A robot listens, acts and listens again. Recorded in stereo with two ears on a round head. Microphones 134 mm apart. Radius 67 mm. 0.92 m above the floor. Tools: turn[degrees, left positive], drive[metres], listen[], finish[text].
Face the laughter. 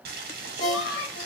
Thought: The laughter: about 75° left or 105° left.
Action: turn[75]
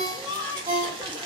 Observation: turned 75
Thought: So it is at 20° left.
Action: turn[20]
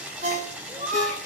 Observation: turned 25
Action: finish[Found it: laughter, straight ahead, 2 to 4 m away.]